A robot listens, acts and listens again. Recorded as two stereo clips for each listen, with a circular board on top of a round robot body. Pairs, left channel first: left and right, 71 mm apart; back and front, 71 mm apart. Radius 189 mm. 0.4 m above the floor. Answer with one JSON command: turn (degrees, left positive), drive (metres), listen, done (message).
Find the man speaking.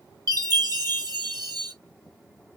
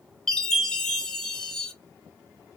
{"listen": true}
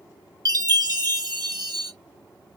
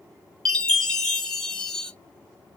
{"listen": true}
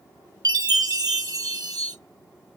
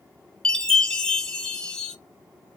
{"done": "I can't make out a man speaking, only a chime."}